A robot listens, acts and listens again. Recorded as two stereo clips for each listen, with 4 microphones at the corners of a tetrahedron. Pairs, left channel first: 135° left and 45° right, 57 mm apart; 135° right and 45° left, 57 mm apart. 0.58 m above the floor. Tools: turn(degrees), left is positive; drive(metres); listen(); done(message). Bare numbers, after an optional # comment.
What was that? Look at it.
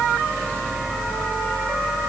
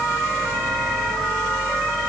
listen()
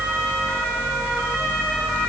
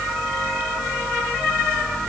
listen()
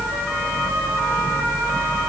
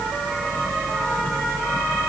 done("I can't make out anything to turn to.")